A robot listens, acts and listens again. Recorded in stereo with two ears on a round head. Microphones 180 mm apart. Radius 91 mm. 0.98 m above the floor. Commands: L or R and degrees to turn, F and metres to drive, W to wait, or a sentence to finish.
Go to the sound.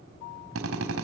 R70
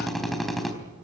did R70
F1.0
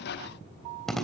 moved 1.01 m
F1.0
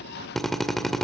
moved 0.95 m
F1.0
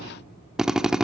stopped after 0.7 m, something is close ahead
Arrived at the drill, straight ahead.